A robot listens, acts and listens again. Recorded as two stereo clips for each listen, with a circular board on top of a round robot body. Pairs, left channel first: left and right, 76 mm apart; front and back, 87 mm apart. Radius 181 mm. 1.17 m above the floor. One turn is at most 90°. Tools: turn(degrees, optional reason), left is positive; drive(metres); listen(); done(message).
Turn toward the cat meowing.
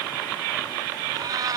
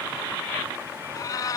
turn(degrees=-50, reason="The cat meowing: 50° right.")
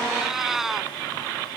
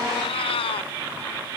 done("Facing the cat meowing.")